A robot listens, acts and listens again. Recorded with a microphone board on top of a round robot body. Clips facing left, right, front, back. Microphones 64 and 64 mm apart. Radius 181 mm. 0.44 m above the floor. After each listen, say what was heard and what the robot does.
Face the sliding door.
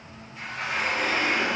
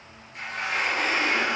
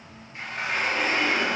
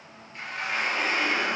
The sliding door: 70° right. Turn 70° right.
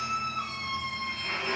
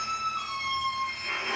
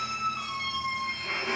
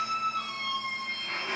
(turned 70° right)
The sliding door is now 20° right. Turn 20° right.
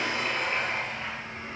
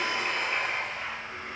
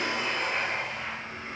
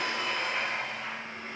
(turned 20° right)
Facing the sliding door, 2 to 4 m away.